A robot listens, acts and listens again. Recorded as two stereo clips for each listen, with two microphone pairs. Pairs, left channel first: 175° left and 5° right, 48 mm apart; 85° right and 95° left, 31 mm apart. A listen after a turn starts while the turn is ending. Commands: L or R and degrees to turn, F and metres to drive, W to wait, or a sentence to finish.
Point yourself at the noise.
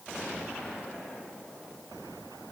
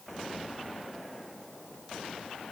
W
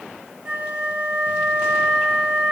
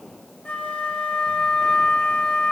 R65
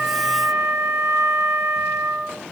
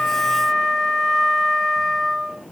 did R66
Found it: a flute, straight ahead.